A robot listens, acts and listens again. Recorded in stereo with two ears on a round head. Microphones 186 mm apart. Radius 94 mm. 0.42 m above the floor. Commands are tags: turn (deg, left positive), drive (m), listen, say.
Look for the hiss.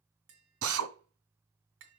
<listen/>
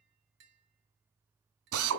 <listen/>
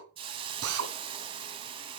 <turn deg="-25"/>
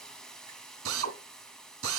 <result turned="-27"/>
<say>Facing the hiss.</say>